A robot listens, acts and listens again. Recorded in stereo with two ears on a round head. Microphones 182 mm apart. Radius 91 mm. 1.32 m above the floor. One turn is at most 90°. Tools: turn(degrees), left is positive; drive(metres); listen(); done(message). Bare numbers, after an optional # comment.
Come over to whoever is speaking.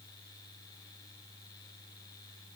listen()
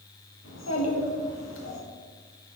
# The child speaking: about 75° left or 105° left.
turn(75)
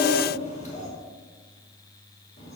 # So it is at 35° left.
turn(35)
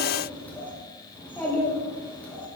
# The child speaking is now 10° left.
turn(10)
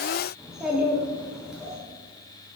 drive(1.0)
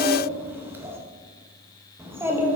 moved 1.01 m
# The child speaking is now 10° right.
turn(-10)
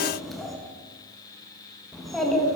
drive(1.0)
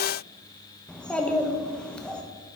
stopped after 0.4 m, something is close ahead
done("Arrived at the child speaking, straight ahead.")